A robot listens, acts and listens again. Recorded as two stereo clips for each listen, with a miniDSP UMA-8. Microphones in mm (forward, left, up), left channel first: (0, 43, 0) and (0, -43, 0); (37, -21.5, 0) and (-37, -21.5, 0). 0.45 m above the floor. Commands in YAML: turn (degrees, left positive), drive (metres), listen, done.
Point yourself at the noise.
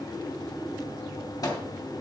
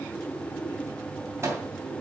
turn: 130
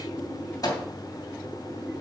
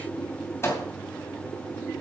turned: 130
turn: 50
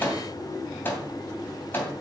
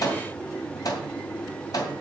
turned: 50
turn: 25
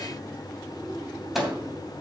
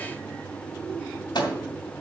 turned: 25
done: "Found it: a microwave, straight ahead, 2 to 4 m away."